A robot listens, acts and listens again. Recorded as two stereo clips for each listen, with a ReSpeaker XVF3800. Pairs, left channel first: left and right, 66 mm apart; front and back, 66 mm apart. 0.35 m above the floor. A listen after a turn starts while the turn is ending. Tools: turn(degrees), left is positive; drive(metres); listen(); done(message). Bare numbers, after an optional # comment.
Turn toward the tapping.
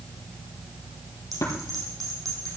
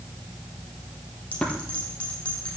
# The tapping: 75° left.
turn(75)
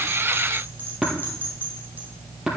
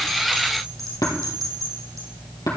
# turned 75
# The tapping is now 10° right.
turn(-10)
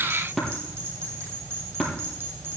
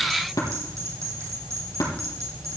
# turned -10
done("Found it: tapping, straight ahead, over 4 m away.")